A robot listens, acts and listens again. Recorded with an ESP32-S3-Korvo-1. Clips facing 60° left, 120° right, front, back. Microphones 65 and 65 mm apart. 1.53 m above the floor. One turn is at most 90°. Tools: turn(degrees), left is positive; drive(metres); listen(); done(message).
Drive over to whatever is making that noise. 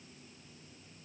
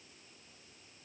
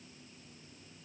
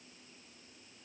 listen()
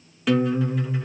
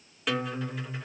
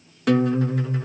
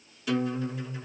turn(degrees=-30)
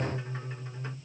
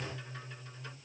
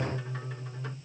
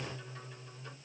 drive(metres=1.0)
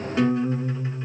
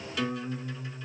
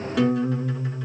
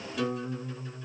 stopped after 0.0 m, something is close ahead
done("Blocked. The guitar is further on, straight ahead.")